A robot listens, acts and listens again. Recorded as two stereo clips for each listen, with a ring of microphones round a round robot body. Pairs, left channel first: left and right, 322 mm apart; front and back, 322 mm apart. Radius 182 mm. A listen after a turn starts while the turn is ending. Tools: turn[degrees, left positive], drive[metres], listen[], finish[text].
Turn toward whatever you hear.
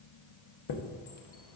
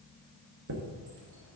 Thought: The chime: 120° left.
Action: turn[120]
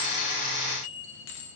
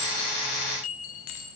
Thought: The chime is now 30° left.
Action: turn[30]
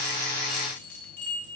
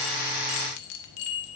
Action: finish[Facing the chime.]